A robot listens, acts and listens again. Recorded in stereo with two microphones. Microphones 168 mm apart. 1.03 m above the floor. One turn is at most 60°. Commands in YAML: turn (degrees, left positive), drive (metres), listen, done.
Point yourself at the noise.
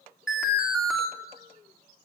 turn: -30
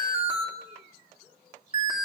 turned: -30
turn: -60
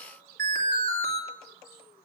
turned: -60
turn: -60
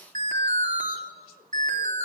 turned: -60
turn: -50
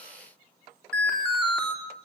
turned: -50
done: "Found it: an alarm, straight ahead, 2 to 4 m away."